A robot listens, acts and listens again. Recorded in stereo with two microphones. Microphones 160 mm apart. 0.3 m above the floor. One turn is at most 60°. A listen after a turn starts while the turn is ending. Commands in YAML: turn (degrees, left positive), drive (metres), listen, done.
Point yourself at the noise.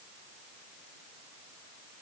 listen: true
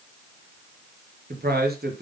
turn: -60
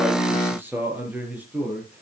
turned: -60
done: "Found it: a man speaking, straight ahead, over 4 m away."